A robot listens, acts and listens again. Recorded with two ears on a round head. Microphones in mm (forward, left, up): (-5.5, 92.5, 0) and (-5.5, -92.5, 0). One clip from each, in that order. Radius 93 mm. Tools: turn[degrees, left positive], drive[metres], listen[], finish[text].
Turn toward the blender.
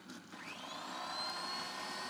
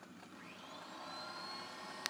Thought: The blender: about 30° left or 150° left.
Action: turn[30]
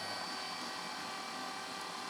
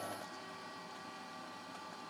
Thought: So it is at 110° left.
Action: turn[110]
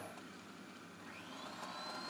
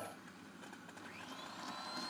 Thought: The blender is now 10° right.
Action: turn[-10]
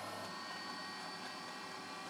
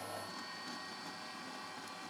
Action: finish[Facing the blender, under 1 m away.]